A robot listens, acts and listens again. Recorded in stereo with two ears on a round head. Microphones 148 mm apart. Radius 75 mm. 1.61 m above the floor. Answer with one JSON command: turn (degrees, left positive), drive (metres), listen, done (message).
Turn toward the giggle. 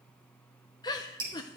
{"turn": 25}
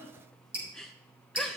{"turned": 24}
{"done": "Found it: a giggle, straight ahead, under 1 m away."}